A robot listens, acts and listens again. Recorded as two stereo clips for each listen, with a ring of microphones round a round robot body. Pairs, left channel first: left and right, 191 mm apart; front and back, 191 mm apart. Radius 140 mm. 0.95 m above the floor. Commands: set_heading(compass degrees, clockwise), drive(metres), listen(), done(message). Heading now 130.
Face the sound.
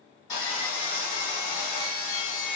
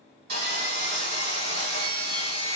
set_heading(325)
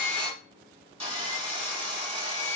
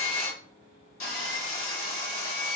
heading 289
set_heading(329)
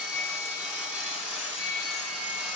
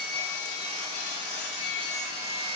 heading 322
done("Facing the sawing.")